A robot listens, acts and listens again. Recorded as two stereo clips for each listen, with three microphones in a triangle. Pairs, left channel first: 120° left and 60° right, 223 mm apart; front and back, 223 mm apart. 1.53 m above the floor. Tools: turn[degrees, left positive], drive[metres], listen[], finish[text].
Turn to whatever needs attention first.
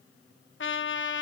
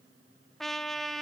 Action: listen[]
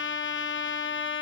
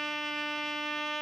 Action: listen[]
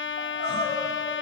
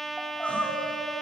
Thought: The crying: 85° right.
Action: turn[-85]
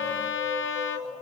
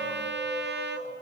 Action: listen[]
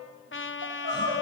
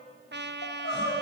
Thought: The crying is now 30° right.
Action: turn[-30]
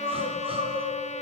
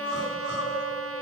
Action: finish[Facing the crying.]